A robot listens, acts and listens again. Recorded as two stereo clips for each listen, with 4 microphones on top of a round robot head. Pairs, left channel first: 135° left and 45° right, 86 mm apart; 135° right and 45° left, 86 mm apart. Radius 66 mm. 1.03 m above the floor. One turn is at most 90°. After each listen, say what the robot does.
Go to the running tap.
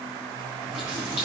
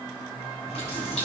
Turn 90° right.
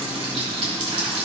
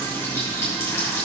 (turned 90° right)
Turn 70° right.
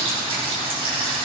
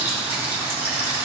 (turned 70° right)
Turn 20° right.
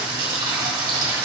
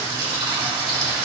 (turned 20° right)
Drive 1.0 m forward.
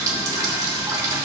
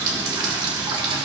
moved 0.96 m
Turn 10° left.
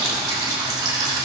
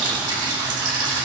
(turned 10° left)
Drive 1.0 m forward.
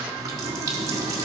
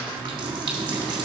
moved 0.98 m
Turn 10° left.
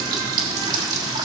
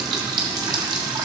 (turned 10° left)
Drive 1.0 m forward.
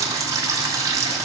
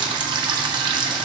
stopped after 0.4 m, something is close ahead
Turn 10° left.
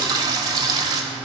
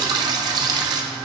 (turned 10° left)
I am next to the running tap.